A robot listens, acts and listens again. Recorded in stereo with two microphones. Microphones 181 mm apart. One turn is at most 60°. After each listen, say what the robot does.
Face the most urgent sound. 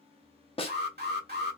Turn 60° right.
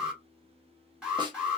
Found it: an alarm, straight ahead, 1 to 2 m away.